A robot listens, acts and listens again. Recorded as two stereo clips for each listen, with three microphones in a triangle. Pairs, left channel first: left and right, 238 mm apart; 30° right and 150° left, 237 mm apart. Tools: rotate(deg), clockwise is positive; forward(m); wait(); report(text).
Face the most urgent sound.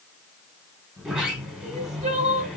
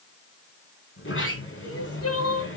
rotate(30)
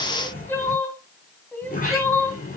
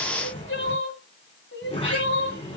rotate(-10)
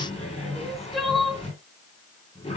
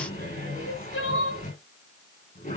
report("Found it: crying, straight ahead.")